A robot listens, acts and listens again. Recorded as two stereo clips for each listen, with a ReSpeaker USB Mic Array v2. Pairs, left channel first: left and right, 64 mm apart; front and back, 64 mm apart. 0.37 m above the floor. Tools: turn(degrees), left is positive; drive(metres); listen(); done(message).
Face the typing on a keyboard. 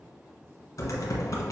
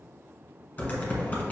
turn(degrees=65)
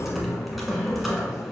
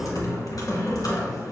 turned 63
done("Found it: typing on a keyboard, straight ahead, 1 to 2 m away.")